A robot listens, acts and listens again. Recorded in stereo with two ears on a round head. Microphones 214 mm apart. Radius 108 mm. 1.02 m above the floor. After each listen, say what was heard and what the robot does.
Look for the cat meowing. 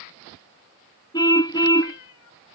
The cat meowing: about 65° left or 115° left. Turn 65° left.
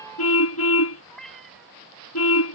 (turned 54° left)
Facing the cat meowing.